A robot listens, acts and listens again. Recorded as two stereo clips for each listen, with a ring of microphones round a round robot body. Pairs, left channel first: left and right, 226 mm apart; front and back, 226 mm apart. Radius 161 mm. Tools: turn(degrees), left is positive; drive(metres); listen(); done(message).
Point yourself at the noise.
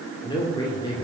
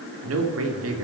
turn(degrees=165)
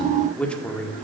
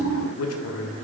done("Found it: a man speaking, straight ahead, 1 to 2 m away.")